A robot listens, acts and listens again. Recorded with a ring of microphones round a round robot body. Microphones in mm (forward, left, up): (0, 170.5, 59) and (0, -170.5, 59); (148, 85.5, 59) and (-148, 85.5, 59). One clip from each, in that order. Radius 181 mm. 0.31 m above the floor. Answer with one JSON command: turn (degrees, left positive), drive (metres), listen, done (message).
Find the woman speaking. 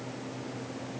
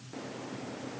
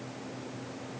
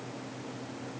{"listen": true}
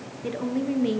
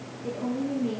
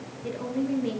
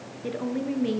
{"turn": 115}
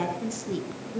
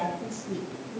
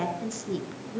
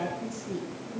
{"turn": 30}
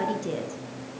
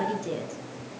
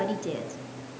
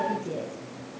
{"done": "Facing the woman speaking, over 4 m away."}